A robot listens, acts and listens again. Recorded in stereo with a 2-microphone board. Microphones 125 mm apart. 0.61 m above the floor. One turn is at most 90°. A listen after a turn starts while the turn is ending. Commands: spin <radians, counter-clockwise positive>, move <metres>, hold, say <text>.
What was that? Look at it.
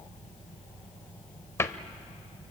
spin 0.35
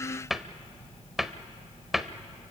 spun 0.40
say Facing the cupboard door, under 1 m away.